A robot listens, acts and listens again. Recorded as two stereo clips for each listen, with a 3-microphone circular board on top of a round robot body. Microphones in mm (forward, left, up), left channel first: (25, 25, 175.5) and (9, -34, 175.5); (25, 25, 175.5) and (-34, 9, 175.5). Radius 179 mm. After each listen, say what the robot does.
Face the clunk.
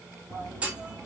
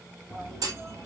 Turn 175° right.
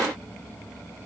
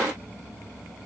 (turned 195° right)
Turn 20° left.
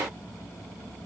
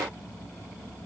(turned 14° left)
Facing where the clunk came from. I can't hear it now.